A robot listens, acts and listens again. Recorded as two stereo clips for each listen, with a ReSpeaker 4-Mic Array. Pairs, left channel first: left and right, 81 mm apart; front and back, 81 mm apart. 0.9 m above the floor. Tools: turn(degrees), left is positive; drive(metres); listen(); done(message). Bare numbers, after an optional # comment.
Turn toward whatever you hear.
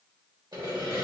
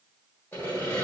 # The sawing: 65° right.
turn(-65)
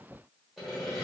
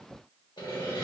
done("Facing the sawing.")